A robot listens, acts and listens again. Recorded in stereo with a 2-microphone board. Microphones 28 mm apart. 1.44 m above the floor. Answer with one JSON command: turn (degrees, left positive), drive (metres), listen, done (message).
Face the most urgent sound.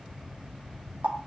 {"listen": true}
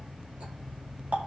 {"listen": true}
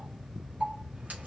{"done": "I can't make out anything urgent to turn to."}